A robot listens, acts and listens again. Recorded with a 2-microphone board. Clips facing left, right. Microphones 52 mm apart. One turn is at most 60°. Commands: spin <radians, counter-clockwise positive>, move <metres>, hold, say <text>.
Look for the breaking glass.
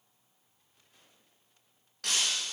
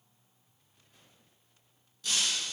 spin 1.05
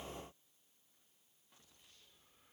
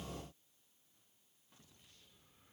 hold
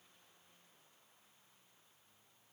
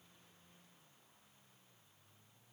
say I heard breaking glass, but can't make it out now. It was about 15° left or 45° left.